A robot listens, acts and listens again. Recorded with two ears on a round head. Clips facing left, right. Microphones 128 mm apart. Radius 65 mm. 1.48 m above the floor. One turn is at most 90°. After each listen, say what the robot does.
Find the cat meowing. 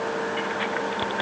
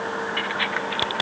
Keep listening.
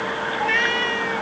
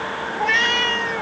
Turn 50° right.
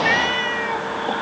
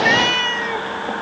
Turn 50° right.
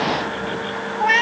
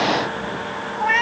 Turn 40° left.
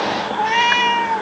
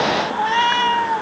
Turn 15° left.
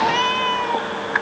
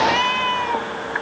Found it: a cat meowing, straight ahead.